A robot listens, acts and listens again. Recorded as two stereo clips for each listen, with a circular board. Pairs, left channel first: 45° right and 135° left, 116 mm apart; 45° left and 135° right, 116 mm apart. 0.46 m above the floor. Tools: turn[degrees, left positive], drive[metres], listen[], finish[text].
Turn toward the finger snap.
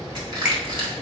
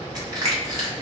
Thought: The finger snap: 145° right.
Action: turn[-145]
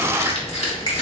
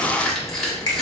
Action: finish[Found it: a finger snap, straight ahead.]